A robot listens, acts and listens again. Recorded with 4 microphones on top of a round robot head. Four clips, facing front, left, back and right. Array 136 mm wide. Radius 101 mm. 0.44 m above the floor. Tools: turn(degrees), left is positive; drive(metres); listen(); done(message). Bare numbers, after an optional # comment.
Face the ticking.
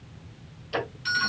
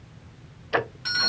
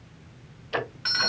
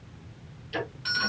# The ticking: 95° left.
turn(95)
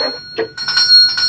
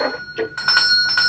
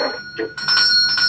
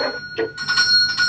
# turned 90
done("Facing the ticking.")